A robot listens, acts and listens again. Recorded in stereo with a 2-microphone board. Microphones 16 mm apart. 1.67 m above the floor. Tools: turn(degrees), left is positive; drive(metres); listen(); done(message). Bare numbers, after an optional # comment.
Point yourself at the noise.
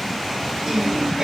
# The singing: about 30° right or 150° right.
turn(-30)
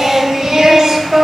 # The singing: about 40° right or 140° right.
turn(-40)
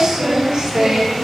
# So it is at 125° right.
turn(-125)
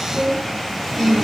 # The singing is now 50° right.
turn(-50)
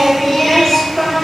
done("Facing the singing.")